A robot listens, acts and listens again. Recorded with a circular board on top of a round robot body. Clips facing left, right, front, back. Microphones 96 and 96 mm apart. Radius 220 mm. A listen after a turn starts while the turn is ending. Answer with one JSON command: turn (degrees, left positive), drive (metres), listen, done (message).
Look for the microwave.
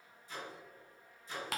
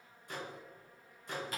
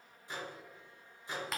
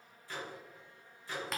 {"turn": -70}
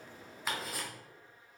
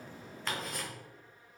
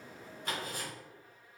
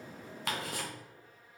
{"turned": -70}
{"listen": true}
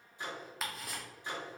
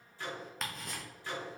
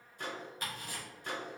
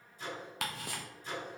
{"turn": 20}
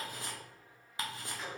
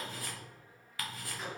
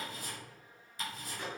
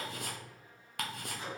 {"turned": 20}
{"done": "Found it: a microwave, straight ahead."}